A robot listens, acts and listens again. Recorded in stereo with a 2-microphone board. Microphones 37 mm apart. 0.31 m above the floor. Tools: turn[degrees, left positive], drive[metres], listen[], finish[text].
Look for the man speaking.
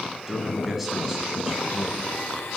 Action: turn[-30]
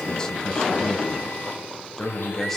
Thought: So it is at 10° left.
Action: turn[10]
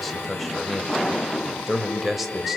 Action: finish[Found it: a man speaking, straight ahead, 1 to 2 m away.]